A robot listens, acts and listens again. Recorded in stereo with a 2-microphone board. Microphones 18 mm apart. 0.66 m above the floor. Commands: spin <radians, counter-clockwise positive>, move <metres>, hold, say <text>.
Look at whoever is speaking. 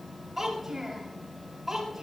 spin -0.26
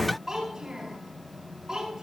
spin -0.61
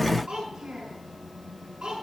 spin -1.83
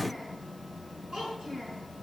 spin -0.70
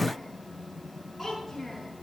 say Found it: a child speaking, straight ahead.